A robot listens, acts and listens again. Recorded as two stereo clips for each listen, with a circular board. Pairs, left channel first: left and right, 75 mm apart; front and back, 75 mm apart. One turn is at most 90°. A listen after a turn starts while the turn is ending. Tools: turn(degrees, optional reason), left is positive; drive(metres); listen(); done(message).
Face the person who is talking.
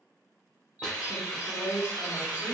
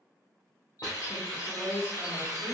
turn(degrees=-60, reason="The woman speaking: 60° right.")
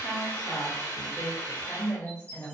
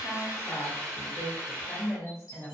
turn(degrees=40, reason="The woman speaking is now 40° left.")
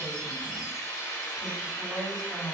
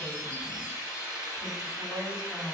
turn(degrees=15, reason="The woman speaking is now 15° left.")
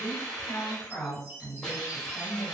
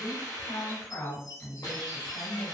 done("Found it: a woman speaking, straight ahead.")